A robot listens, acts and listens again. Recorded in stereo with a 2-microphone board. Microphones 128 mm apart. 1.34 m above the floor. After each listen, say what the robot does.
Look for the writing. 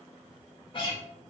Keep listening.
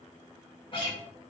Keep listening.
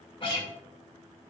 I can't make out writing to turn to.